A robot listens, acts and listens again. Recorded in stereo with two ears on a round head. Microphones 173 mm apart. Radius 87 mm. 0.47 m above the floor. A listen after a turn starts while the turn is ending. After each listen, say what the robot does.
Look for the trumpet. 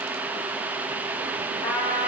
Turn 60° left.
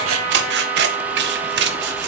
Found it: a trumpet, straight ahead, 2 to 4 m away.